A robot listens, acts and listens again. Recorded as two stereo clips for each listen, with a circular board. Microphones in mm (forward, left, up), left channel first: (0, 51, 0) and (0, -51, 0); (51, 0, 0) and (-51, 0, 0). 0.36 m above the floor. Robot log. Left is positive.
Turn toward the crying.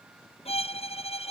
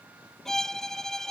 cmd idle
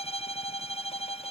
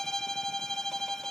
cmd idle
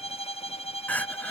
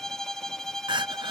note: The crying: 160° left.
cmd yaw +160
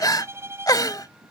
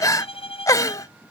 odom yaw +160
note: The crying is now 50° left.
cmd yaw +50
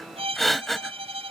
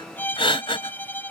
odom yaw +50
end: Found it: crying, straight ahead.